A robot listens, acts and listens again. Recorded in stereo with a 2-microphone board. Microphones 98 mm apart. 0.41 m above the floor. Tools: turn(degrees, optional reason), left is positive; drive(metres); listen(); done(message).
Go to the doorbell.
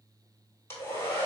listen()
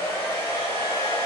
listen()
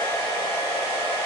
done("I can't make out a doorbell to turn to.")